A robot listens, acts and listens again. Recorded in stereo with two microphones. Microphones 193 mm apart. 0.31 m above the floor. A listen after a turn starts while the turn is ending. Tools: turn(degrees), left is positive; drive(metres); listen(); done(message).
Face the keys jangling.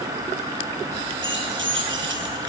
turn(degrees=-90)
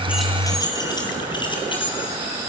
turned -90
turn(degrees=25)
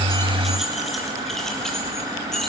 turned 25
done("Facing the keys jangling.")